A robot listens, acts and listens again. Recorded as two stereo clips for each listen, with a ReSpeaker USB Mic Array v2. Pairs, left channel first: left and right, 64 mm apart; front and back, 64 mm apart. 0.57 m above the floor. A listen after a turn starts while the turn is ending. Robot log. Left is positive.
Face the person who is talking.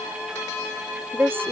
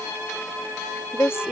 note: The woman speaking: 45° right.
cmd yaw -45
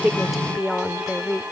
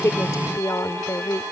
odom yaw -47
end: Facing the woman speaking.